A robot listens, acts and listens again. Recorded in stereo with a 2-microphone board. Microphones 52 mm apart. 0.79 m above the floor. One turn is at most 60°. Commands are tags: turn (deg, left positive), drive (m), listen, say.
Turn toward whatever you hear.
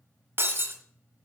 <turn deg="-45"/>
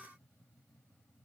<listen/>
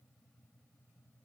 <say>I heard breaking glass, but can't make it out now. It was about straight ahead or 90° right.</say>